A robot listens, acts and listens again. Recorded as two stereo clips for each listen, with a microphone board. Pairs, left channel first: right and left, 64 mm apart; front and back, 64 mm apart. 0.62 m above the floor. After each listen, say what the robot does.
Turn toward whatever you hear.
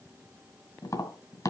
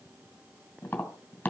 Turn 65° right.
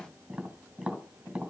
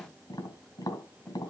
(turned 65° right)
Turn 15° left.
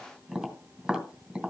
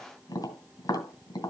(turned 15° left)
Found it: tapping, straight ahead.